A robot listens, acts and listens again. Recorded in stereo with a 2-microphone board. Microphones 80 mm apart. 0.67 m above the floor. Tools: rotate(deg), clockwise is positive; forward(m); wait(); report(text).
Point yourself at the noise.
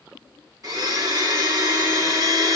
rotate(45)
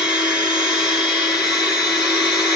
rotate(10)
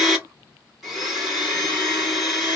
report("Found it: a blender, straight ahead.")